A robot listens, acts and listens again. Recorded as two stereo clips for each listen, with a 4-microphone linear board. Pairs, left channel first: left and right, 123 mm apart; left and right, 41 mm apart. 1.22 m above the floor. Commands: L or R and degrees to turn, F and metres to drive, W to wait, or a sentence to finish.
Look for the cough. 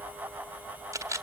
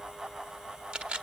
W
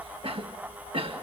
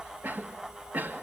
R50
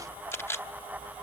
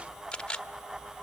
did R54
W
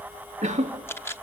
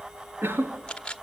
R75
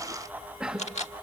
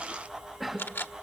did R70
Found it: a cough, straight ahead.